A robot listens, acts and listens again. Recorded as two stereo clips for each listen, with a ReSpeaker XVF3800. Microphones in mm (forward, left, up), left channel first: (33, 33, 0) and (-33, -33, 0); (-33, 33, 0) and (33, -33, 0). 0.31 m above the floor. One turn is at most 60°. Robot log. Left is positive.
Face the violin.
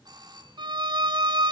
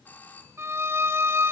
note: The violin: 105° right.
cmd yaw -60
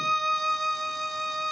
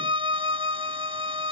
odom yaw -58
note: The violin is now 45° right.
cmd yaw -45
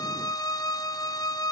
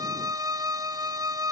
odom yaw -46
end: Found it: a violin, straight ahead.